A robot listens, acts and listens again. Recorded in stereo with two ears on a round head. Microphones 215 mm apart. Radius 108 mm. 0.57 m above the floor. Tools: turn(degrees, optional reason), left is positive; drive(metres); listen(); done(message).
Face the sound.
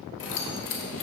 turn(degrees=55, reason="The keys jangling: about 55° left or 125° left.")
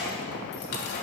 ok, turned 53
turn(degrees=40, reason="So it is at 40° left.")
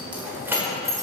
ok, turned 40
turn(degrees=-15, reason="The keys jangling is now 15° right.")
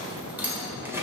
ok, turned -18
turn(degrees=-10, reason="The keys jangling is now 10° right.")
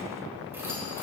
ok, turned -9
turn(degrees=-15, reason="The keys jangling is now 15° right.")
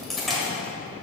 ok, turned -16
done("Found it: keys jangling, straight ahead, 2 to 4 m away.")